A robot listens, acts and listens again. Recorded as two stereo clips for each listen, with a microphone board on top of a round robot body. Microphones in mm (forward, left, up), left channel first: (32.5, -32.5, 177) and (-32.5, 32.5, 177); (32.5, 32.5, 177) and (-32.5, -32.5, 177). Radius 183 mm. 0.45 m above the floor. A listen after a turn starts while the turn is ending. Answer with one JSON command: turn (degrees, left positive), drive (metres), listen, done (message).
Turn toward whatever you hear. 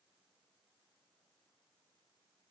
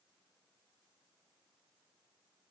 {"listen": true}
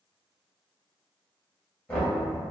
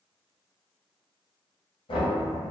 {"turn": 30}
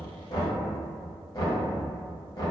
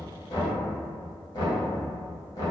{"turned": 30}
{"done": "Found it: knocking, straight ahead."}